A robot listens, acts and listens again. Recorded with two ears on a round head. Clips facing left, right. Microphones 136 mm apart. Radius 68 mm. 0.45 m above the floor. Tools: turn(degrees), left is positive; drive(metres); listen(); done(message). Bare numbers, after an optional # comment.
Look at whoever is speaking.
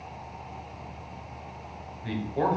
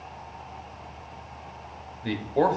# The man speaking: about 55° right or 125° right.
turn(-55)
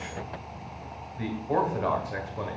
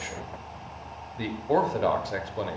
# So it is at 50° right.
turn(-50)
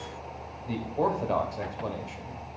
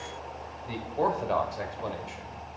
done("Found it: a man speaking, straight ahead, 1 to 2 m away.")